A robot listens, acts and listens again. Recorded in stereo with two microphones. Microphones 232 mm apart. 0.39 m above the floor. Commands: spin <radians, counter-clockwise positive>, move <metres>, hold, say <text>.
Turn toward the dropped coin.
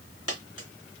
spin 1.13
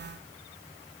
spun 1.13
hold
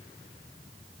say I heard a dropped coin, but can't make it out now. It was about straight ahead or 50° left.